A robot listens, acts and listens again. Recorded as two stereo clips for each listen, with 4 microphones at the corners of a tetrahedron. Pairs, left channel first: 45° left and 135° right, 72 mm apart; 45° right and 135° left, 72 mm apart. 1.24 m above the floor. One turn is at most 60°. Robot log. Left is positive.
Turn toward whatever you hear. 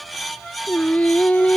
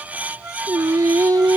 note: The singing: 115° left.
cmd yaw +60
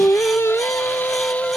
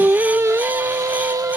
note: The singing is now 115° left.
cmd yaw +60
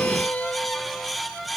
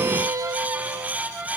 note: The singing is now 115° left.
cmd yaw +60
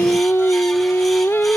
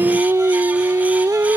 note: The singing is now 95° left.
cmd yaw +60
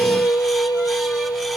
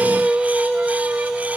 note: The singing is now 55° left.
cmd yaw +55
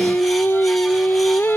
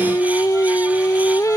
note: The singing is now 10° right.
cmd yaw -10
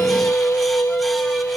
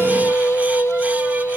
end: Found it: singing, straight ahead.